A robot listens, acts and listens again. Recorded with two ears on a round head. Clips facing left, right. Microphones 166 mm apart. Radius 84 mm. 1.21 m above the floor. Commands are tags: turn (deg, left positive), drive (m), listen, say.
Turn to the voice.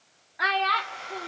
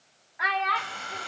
<turn deg="50"/>
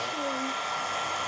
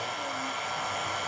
<listen/>
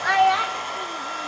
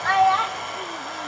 <turn deg="25"/>
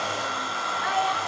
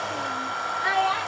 <turn deg="-30"/>
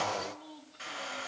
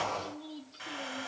<listen/>
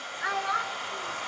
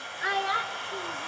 <turn deg="-30"/>
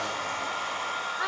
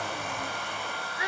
<turn deg="-10"/>
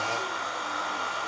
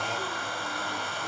<listen/>
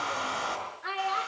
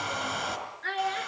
<say>Facing the child speaking.</say>